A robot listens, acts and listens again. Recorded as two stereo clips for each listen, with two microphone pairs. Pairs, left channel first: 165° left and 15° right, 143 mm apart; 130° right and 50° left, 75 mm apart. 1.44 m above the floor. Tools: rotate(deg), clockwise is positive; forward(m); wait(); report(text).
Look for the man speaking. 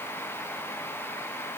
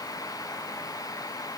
wait()
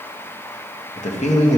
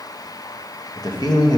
rotate(155)
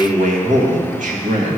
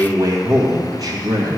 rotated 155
rotate(-15)
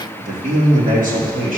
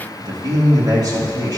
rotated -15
rotate(-10)
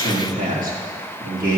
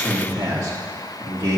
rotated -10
report("Facing the man speaking, 2 to 4 m away.")